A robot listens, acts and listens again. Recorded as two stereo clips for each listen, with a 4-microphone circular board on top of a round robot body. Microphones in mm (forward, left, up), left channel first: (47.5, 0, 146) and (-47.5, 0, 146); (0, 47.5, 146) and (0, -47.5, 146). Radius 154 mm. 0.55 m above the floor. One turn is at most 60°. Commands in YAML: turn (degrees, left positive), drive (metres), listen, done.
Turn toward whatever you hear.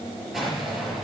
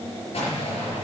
turn: 60
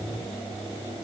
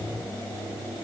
turn: 35
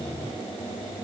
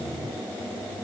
done: "Facing where the explosion came from. I can't hear it now."